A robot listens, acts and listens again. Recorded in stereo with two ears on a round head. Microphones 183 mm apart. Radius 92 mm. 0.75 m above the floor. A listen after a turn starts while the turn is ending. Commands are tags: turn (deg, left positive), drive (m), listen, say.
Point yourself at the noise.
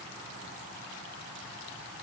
<listen/>
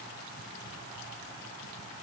<listen/>
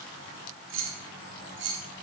<turn deg="-60"/>
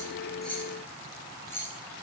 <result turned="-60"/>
<turn deg="15"/>
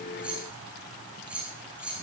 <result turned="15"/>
<say>Facing the keys jangling, 2 to 4 m away.</say>